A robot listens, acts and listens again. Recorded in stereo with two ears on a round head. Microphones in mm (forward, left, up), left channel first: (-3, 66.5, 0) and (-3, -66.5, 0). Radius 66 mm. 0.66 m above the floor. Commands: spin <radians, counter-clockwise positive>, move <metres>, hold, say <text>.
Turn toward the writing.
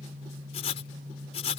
spin 0.79
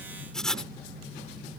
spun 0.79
say Facing the writing.